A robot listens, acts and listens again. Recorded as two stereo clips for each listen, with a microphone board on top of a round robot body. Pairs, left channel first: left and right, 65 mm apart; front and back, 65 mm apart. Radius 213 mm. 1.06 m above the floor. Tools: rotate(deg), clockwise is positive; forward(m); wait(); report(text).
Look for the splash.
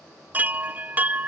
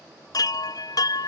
wait()
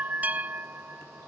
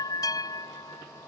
wait()
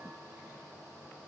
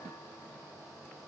report("I can't make out a splash, only a chime.")